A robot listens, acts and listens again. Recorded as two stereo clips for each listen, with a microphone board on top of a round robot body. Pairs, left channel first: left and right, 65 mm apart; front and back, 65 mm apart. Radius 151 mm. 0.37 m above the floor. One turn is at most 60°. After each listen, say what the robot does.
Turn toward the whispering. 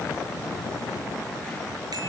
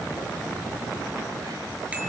Keep listening.
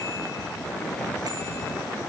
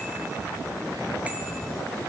Keep listening.
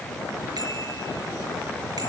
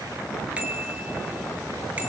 I can't make out whispering.